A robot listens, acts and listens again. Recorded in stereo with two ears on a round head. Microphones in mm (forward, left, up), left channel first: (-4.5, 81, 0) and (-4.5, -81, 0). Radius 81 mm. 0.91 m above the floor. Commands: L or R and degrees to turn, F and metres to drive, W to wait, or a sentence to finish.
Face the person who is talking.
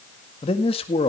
L30
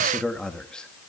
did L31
Facing the man speaking.